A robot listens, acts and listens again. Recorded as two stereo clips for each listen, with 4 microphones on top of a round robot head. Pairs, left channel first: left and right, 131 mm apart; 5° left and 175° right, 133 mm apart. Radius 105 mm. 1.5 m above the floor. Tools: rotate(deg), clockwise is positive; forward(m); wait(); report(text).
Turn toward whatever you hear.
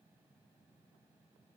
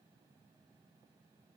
wait()
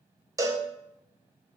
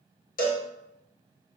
rotate(25)
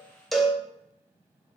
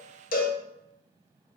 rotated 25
report("Found it: a cowbell, straight ahead, under 1 m away.")